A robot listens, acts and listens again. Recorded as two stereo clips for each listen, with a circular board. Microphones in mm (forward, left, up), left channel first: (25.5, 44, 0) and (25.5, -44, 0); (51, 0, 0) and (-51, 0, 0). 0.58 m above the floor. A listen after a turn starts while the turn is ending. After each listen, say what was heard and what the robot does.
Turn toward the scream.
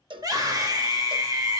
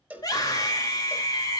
The scream: 45° right. Turn 45° right.
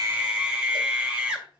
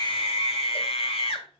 The scream is now 15° right. Turn 15° right.
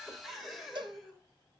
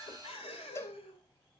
Keep listening.
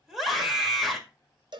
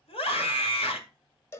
Found it: a scream, straight ahead.